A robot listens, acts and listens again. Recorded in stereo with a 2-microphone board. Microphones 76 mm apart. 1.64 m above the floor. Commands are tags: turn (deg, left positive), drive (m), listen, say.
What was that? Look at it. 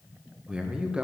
<turn deg="-30"/>
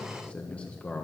<turn deg="15"/>
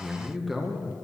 <say>Facing the man speaking, 1 to 2 m away.</say>